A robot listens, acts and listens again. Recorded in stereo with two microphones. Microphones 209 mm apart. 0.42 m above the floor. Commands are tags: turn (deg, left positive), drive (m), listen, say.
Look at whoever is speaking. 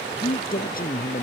<turn deg="40"/>
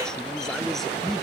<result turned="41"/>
<say>Facing the man speaking.</say>